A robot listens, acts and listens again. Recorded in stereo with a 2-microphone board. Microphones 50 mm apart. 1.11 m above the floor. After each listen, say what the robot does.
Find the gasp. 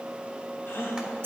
Turn 45° left.
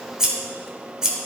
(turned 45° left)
Keep listening.
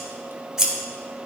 I heard a gasp, but can't make it out now. It was about straight ahead or 90° left.